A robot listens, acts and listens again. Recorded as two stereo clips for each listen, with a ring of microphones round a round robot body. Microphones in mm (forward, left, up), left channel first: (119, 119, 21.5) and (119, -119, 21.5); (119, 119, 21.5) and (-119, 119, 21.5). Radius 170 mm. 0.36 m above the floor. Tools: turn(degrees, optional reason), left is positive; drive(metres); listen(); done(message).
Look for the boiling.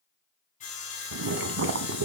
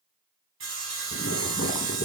turn(degrees=-55, reason="The boiling: 55° right.")
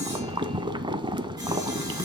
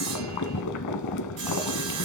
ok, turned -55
turn(degrees=-15, reason="The boiling is now 15° right.")
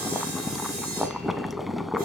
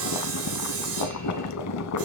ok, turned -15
done("Found it: boiling, straight ahead, under 1 m away.")